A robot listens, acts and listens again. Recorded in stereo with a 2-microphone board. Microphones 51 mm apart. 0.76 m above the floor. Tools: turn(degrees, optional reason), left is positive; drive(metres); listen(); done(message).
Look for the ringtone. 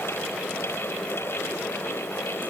listen()
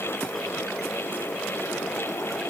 listen()
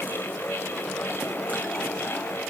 done("I can't make out a ringtone to turn to.")